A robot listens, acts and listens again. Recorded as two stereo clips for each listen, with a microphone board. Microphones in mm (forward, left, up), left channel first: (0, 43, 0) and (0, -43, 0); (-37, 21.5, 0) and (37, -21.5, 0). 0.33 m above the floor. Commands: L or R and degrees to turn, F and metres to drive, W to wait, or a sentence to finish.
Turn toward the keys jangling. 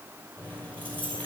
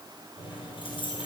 L160
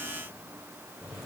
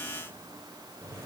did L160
L30
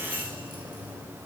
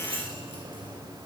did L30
R15
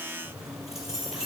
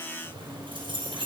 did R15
Found it: keys jangling, straight ahead.